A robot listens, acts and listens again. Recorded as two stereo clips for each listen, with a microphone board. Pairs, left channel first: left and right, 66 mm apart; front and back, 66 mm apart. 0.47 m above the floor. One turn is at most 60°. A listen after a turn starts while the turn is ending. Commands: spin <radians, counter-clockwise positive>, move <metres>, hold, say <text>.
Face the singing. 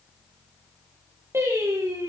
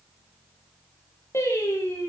spin -0.79
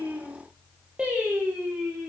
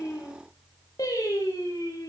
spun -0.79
spin -0.35
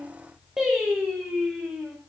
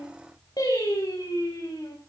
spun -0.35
spin -0.17
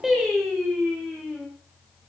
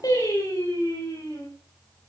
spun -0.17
say Found it: singing, straight ahead.